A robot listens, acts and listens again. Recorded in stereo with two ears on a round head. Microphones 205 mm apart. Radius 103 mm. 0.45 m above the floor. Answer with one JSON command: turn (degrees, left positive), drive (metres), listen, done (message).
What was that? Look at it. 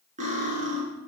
{"turn": -35}
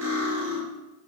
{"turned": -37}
{"turn": -105}
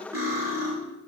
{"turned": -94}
{"turn": -10}
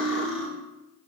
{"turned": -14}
{"done": "Facing the cutlery clinking."}